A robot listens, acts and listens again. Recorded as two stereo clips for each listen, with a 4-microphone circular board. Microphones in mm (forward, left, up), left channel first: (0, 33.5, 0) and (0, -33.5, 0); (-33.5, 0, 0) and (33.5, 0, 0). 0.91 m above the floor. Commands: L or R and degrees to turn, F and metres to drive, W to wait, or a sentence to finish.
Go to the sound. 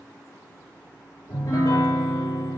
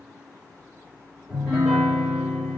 L100
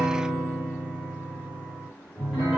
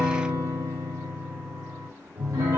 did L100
R10
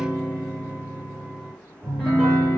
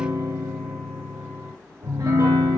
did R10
F1.0
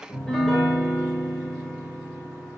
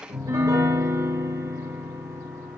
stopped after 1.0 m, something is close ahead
I am next to the piano.